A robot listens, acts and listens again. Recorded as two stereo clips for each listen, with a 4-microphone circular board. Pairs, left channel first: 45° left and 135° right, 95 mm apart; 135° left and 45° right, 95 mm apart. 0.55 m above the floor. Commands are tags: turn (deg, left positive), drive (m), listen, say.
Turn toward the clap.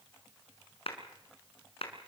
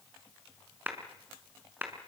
<turn deg="25"/>
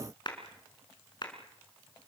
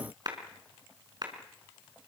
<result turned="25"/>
<say>Found it: a clap, straight ahead.</say>